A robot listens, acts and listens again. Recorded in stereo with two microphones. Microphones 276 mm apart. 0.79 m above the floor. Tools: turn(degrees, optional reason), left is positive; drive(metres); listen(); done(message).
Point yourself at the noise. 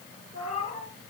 turn(degrees=-60, reason="The cat meowing: about 60° right or 120° right.")
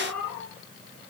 done("Found it: a cat meowing, straight ahead.")